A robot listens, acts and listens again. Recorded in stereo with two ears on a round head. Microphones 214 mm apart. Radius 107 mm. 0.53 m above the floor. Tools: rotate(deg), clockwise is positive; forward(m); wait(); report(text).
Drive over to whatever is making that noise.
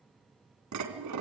rotate(90)
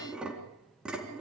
forward(1.0)
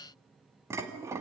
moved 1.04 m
rotate(10)
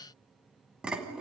forward(1.0)
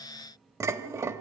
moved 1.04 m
rotate(15)
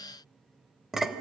forward(1.0)
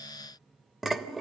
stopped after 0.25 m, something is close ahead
report("Arrived at the dishes clattering, straight ahead.")